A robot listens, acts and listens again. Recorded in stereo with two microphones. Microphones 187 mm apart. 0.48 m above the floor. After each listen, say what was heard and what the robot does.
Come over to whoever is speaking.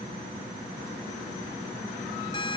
Keep listening.
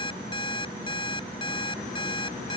Keep listening.
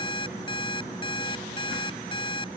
I can't make out anyone speaking, only an alarm clock.